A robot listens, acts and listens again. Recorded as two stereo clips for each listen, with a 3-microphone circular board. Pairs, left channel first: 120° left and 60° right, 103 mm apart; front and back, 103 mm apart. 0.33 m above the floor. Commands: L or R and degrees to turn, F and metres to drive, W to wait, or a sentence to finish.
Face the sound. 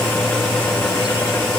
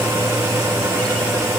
W
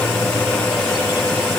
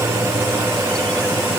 W
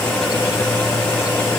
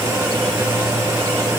I can't make out anything to turn to.